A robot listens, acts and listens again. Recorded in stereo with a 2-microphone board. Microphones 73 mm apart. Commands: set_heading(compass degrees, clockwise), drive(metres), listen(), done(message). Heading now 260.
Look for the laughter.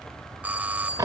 listen()
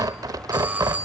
listen()
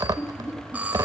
set_heading(215)
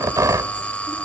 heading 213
listen()
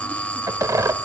listen()
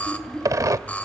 set_heading(203)
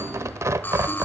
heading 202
listen()
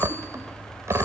listen()
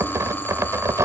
done("I heard laughter from this way, but can't make it out now.")